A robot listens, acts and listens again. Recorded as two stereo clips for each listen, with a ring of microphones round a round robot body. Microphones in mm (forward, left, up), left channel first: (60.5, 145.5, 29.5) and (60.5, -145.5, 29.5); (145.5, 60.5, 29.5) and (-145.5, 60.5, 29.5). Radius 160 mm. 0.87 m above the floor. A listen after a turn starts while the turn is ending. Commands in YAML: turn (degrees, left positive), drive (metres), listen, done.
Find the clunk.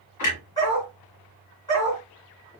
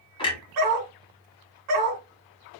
turn: 75
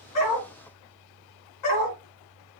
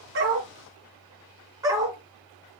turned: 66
done: "I heard a clunk from this way, but can't make it out now."